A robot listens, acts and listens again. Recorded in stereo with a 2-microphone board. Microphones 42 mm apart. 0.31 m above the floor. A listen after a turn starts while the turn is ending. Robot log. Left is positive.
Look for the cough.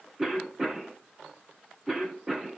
cmd yaw -30
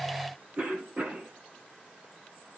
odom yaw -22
note: So it is at 145° right.
cmd yaw -145
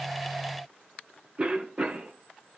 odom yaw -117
note: The cough is now 30° right.
cmd yaw -30
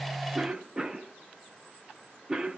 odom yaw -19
note: The cough is now 10° right.
cmd yaw -10
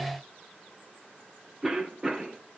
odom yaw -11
end: Facing the cough, over 4 m away.